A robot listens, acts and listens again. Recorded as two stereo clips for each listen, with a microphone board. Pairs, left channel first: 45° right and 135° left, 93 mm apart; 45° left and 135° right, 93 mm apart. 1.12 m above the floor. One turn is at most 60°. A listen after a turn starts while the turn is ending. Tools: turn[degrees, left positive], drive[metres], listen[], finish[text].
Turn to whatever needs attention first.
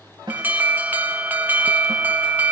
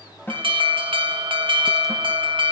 Thought: The alarm: 155° right.
Action: turn[-60]
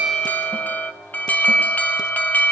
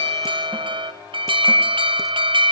Thought: The alarm is now 115° right.
Action: turn[-60]
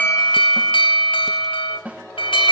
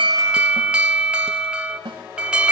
Thought: The alarm is now 55° right.
Action: turn[-55]
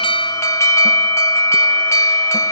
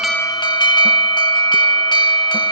Thought: The alarm is now 10° left.
Action: turn[10]
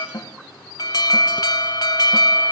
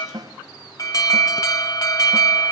Action: finish[Found it: an alarm, straight ahead.]